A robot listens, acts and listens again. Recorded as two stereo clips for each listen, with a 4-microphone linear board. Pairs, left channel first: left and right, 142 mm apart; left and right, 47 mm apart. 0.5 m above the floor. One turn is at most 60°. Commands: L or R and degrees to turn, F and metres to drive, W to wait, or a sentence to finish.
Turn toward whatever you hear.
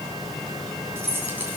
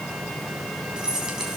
R30
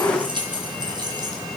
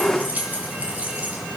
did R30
R60
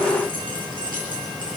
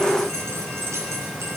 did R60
R60
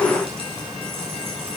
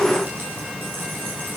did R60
R40
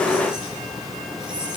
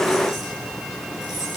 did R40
W
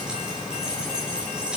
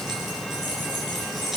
Found it: keys jangling, straight ahead.